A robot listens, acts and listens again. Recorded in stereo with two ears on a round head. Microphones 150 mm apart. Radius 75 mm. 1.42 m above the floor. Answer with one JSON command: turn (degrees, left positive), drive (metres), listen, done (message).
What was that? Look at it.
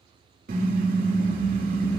{"turn": -55}
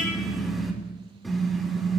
{"done": "Facing the car horn, 2 to 4 m away."}